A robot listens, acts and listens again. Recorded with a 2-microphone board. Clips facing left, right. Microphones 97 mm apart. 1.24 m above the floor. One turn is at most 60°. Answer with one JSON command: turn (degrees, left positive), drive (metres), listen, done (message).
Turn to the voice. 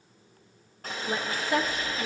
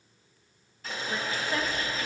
{"turn": 60}
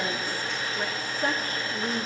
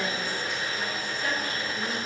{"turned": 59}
{"turn": 35}
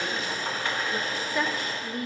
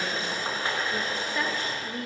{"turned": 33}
{"done": "Facing the woman speaking, 1 to 2 m away."}